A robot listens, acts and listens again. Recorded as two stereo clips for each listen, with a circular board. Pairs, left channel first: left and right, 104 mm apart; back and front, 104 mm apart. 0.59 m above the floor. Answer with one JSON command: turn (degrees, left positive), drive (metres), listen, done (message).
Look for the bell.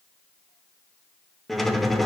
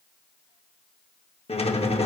{"listen": true}
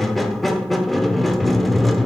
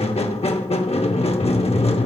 {"listen": true}
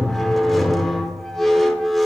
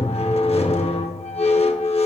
{"done": "I can't make out a bell, only a squeak."}